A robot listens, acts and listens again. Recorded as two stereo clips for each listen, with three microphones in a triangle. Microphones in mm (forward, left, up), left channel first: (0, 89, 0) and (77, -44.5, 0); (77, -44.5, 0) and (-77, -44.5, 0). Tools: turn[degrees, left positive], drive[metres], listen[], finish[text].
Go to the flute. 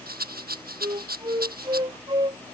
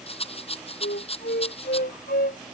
Action: drive[1.0]
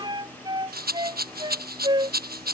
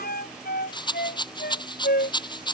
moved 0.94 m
Action: drive[1.0]
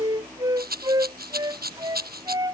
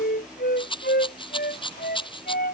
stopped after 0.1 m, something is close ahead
Action: finish[Blocked. The flute is further on, straight ahead.]